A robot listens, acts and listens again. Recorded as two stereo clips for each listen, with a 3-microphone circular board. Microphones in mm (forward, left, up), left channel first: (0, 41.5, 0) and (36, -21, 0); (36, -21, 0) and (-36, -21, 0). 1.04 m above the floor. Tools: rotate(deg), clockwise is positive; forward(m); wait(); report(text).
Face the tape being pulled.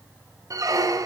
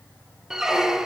wait()
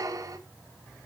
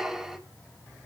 wait()
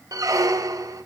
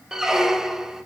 report("I can't make out tape being pulled, only a squeak.")